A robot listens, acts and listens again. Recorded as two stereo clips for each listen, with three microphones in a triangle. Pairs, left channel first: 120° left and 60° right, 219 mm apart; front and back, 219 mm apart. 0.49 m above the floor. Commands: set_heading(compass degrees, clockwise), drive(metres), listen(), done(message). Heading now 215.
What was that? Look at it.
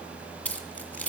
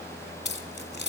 set_heading(180)
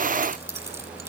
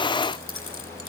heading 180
set_heading(160)
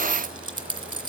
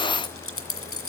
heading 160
set_heading(150)
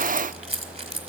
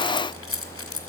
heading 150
done("Found it: keys jangling, straight ahead.")